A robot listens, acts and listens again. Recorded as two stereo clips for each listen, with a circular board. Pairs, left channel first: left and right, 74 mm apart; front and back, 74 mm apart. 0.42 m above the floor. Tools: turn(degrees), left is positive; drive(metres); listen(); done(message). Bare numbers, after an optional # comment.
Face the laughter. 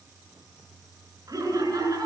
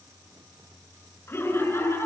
# The laughter: 55° right.
turn(-55)
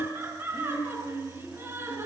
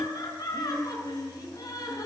# The laughter is now 30° right.
turn(-30)
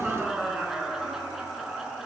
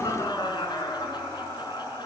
done("Facing the laughter, over 4 m away.")